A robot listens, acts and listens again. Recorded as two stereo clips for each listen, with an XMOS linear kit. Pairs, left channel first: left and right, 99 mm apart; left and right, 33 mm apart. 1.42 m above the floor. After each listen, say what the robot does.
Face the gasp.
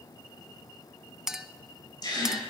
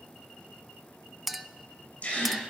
Turn 45° left.
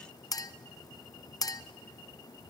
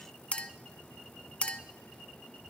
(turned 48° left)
Keep listening.
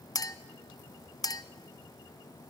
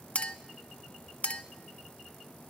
I heard a gasp, but can't make it out now. It was about 5° right or 85° left.